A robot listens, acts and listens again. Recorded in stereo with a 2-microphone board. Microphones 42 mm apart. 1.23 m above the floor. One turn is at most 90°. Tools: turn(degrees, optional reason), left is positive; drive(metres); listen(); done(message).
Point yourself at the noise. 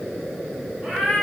turn(degrees=-30)
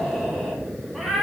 done("Found it: a cat meowing, straight ahead, 1 to 2 m away.")